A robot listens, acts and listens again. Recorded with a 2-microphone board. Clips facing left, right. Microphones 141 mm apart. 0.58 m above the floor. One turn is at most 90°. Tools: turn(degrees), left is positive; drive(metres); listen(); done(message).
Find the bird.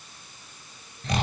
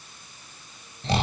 listen()
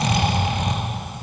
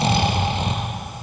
listen()
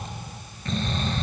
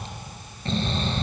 done("I can't make out a bird to turn to.")